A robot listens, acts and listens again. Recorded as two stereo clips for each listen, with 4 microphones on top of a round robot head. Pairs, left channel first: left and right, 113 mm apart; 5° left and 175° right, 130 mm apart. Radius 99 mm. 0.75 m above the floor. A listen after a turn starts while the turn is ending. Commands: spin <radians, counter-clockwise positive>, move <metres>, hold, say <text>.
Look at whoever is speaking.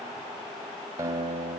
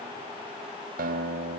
hold
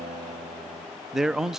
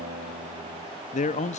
say Found it: a man speaking, straight ahead, under 1 m away.